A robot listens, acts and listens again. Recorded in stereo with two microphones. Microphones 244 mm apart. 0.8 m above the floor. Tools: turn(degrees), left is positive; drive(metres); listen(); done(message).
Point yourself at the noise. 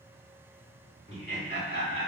turn(degrees=40)
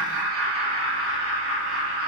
turn(degrees=120)
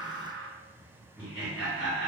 done("Facing the laughter, 2 to 4 m away.")